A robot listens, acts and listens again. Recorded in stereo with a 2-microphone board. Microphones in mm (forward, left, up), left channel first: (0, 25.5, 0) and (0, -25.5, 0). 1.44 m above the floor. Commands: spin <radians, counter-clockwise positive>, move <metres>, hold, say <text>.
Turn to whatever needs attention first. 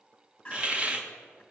spin 0.35
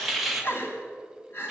spin 2.44
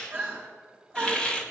spin -0.44
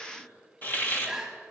say Facing the crying.